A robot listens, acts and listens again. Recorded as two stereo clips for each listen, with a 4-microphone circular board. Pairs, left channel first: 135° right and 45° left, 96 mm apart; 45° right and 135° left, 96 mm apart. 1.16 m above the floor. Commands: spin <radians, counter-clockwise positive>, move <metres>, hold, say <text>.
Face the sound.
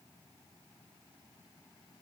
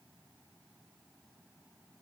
hold
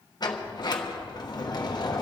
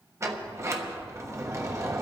spin -2.97
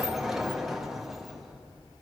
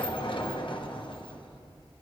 spin -0.79
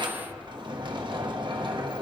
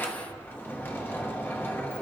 spin 0.35
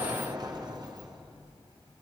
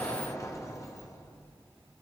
spin 0.17
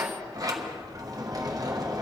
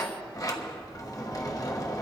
say Found it: a sliding door, straight ahead.